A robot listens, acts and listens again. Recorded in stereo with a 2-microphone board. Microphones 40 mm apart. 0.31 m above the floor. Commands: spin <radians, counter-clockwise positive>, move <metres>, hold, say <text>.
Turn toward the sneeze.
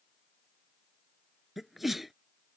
spin -0.52
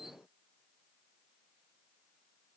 hold
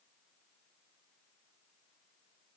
say I heard a sneeze, but can't make it out now. It was about 25° left or 145° right.